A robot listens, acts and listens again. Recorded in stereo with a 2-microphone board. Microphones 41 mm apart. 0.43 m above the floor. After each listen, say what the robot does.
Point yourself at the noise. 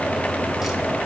Keep listening.
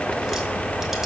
Keep listening.
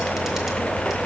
I can't make out anything to turn to.